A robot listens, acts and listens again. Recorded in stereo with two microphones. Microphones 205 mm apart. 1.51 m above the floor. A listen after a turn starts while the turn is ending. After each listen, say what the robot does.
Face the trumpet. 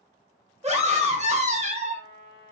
Turn 45° left.
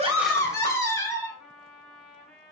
Found it: a trumpet, straight ahead, 1 to 2 m away.